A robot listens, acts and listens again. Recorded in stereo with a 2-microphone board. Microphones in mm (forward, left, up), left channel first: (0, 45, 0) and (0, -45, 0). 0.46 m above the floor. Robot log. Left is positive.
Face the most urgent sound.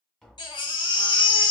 note: The baby crying: about 60° left or 120° left.
cmd yaw +60
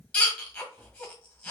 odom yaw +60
note: So it is at 10° left.
cmd yaw +10
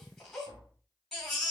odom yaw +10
end: Facing the baby crying.